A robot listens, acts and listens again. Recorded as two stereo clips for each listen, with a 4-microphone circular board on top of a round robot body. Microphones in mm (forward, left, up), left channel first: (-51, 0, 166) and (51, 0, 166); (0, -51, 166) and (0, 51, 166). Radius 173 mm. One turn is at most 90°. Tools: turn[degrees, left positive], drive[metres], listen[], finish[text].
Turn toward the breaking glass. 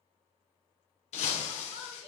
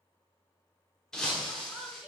Thought: The breaking glass: 175° right.
Action: turn[-90]
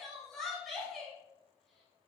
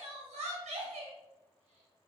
Thought: Nothing new. It was at 85° right.
Action: turn[-85]
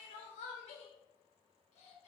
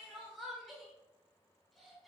Action: finish[Facing where the breaking glass came from. I can't hear it now.]